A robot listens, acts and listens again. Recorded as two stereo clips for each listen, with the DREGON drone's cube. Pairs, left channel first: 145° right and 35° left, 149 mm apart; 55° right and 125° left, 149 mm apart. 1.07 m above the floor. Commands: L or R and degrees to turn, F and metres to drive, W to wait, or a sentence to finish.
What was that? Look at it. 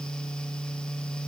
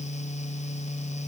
W
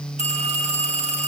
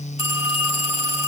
Found it: a phone ringing, straight ahead.